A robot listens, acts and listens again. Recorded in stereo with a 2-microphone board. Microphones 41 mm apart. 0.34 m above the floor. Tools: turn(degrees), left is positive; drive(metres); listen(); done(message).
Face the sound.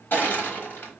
turn(degrees=60)
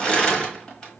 turn(degrees=25)
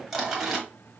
done("Found it: crushing, straight ahead, 1 to 2 m away.")